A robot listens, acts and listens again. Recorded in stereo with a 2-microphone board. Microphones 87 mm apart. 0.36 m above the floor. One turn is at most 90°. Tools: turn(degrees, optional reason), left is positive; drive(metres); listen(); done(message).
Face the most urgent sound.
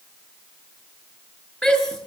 turn(degrees=30)
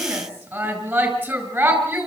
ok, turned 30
turn(degrees=-20, reason="So it is at 20° right.")
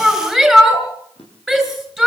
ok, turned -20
done("Facing the shout, over 4 m away.")